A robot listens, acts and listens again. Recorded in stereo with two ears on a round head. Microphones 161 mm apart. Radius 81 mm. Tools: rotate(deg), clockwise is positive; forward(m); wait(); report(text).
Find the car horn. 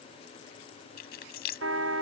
rotate(90)
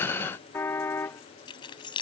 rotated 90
rotate(-10)
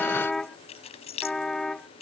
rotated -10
report("Facing the car horn.")